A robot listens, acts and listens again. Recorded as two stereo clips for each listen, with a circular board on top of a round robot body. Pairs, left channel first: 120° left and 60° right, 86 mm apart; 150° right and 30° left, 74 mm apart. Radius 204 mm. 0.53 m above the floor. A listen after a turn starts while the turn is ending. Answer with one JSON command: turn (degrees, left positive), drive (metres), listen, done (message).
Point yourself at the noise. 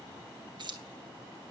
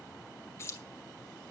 {"turn": -95}
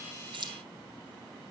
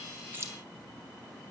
{"listen": true}
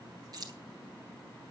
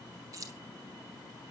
{"turn": -15}
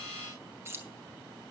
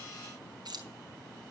{"done": "Facing the keys jangling."}